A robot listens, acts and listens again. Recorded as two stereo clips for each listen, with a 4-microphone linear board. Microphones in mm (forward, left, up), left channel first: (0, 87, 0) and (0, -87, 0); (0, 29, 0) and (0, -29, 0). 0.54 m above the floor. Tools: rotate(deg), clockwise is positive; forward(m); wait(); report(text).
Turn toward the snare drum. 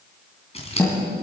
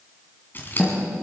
rotate(-15)
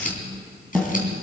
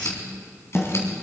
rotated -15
report("Facing the snare drum.")